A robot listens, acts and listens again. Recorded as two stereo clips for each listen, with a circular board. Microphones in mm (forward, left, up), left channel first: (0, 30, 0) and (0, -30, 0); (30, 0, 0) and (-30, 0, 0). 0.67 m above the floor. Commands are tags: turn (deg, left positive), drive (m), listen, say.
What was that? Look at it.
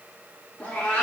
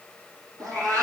<turn deg="165"/>
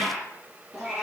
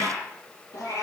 <turn deg="-10"/>
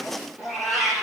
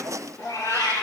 <say>Found it: a cat meowing, straight ahead.</say>